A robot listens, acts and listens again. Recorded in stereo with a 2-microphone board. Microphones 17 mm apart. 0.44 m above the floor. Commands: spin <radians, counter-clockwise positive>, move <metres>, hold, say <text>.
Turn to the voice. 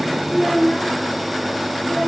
spin 0.70
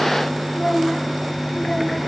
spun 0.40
spin 0.17
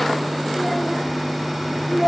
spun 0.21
say Facing the child speaking, over 4 m away.